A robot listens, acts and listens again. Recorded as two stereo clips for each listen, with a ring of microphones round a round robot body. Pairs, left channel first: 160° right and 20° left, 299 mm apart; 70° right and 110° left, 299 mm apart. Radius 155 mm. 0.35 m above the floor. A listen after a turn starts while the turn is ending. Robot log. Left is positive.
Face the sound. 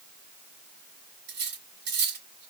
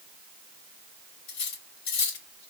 note: The cutlery clinking: 35° right.
cmd yaw -35
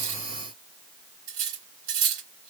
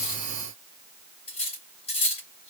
end: Found it: cutlery clinking, straight ahead.